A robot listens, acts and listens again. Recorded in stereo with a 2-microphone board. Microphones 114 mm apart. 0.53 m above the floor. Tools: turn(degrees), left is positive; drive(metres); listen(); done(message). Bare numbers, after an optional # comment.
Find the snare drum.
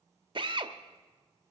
listen()
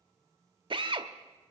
listen()
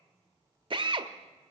done("I can't make out a snare drum, only a drill.")